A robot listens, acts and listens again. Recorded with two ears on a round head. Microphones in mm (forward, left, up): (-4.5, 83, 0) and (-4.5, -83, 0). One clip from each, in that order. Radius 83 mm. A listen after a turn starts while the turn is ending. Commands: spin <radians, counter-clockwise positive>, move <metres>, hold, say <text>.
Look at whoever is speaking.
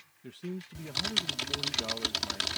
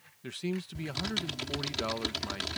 spin -0.79
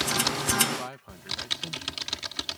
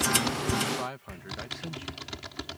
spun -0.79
say Facing the man speaking.